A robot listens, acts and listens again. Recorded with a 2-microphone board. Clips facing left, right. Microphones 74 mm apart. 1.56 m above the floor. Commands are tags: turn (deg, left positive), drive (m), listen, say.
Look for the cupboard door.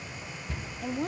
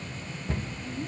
<turn deg="-50"/>
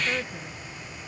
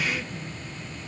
<listen/>
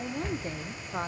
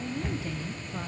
<say>Found it: a cupboard door, straight ahead.</say>